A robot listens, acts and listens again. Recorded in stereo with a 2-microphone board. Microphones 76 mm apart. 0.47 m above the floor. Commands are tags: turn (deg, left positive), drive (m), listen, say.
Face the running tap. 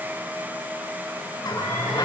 <turn deg="55"/>
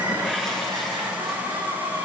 <say>Found it: a running tap, straight ahead, over 4 m away.</say>